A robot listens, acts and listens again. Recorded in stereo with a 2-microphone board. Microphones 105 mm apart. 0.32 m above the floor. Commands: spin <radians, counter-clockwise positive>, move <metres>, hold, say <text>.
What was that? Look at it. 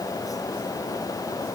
hold
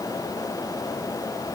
hold
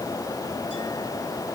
say I can't make out anything.